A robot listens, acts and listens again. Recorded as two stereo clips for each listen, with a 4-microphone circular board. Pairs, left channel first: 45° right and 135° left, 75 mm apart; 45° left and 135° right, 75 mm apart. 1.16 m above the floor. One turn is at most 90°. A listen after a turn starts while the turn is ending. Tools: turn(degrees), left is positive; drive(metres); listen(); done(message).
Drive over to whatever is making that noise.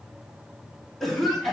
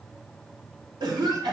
turn(degrees=-90)
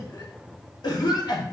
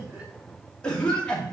turn(degrees=-30)
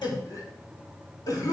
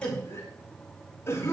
turn(degrees=-10)
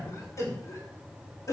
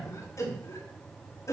drive(metres=1.0)
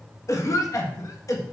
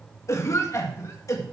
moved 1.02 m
drive(metres=1.0)
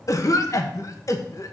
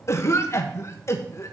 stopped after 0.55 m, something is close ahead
done("I am next to the cough.")